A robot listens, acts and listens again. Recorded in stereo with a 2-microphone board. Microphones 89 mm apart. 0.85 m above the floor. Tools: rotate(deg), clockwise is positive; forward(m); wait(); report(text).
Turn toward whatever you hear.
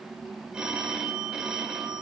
rotate(30)
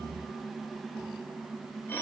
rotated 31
rotate(-25)
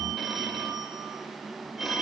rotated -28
report("Facing the phone ringing.")